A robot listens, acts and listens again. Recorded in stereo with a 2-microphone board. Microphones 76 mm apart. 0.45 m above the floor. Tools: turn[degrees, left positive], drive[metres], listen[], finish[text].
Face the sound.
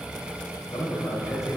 Thought: The man speaking: about 40° left or 140° left.
Action: turn[40]
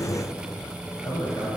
Thought: So it is at 115° left.
Action: turn[115]
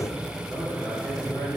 Thought: The man speaking is now 10° right.
Action: turn[-10]
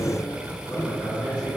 Action: finish[Facing the man speaking.]